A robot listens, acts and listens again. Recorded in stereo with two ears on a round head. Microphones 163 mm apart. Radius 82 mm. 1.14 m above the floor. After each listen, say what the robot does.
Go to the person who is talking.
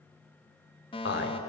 Turn 65° left.
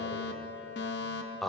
Drive 1.0 m forward.
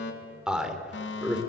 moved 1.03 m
Drive 1.0 m forward.
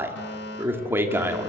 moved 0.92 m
Turn 10° right.
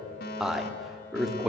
Drive 1.0 m forward.
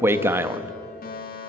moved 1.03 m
Turn 15° right.
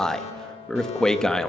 Drive 1.0 m forward.
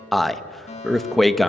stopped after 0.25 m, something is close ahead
Arrived at the man speaking, straight ahead.